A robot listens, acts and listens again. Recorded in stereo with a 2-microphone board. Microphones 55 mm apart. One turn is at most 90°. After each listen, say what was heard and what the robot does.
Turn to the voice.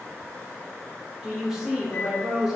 Turn 30° right.
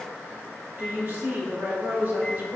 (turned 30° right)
So it is at 135° right. Turn 90° right.
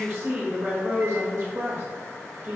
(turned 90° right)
The woman speaking is now 65° right. Turn 65° right.
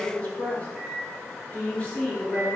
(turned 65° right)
The woman speaking is now 30° left. Turn 30° left.
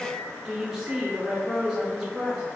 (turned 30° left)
The woman speaking is now 10° right. Turn 10° right.
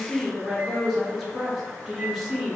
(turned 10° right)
Found it: a woman speaking, straight ahead, 1 to 2 m away.